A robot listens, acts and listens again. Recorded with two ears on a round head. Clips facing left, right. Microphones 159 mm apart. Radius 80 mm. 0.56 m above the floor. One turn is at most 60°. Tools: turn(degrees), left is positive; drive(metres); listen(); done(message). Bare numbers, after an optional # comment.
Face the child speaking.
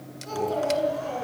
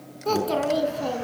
turn(-60)
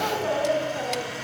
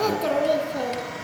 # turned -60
# So it is at 50° right.
turn(-50)
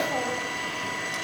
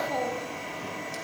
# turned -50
listen()
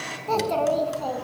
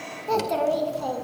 # The child speaking is now 10° right.
turn(-10)
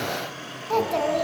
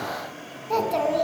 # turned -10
done("Facing the child speaking, 2 to 4 m away.")